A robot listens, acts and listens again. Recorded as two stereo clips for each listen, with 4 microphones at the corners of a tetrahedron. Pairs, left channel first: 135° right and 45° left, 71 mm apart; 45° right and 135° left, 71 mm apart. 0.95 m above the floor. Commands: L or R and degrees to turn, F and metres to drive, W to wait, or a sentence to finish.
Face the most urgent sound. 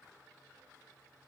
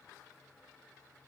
W
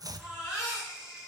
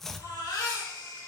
R40
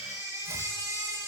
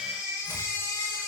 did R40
L10
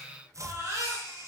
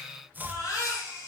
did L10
Found it: a baby crying, straight ahead.